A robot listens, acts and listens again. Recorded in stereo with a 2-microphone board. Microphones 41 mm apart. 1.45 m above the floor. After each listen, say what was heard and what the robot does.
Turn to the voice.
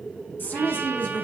The woman speaking: about 55° left or 125° left. Turn 55° left.
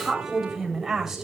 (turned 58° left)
So it is at 10° right. Turn 10° right.
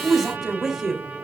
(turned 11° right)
Found it: a woman speaking, straight ahead, 2 to 4 m away.